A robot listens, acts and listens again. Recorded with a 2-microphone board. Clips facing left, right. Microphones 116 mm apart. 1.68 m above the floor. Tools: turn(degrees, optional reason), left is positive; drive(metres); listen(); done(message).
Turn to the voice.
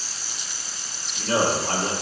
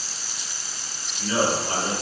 turn(degrees=90)
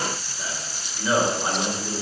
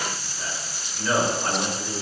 turn(degrees=10, reason="So it is at 10° left.")
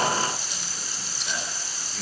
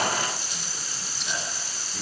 listen()
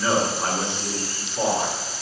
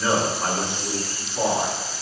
done("Found it: a man speaking, straight ahead, 2 to 4 m away.")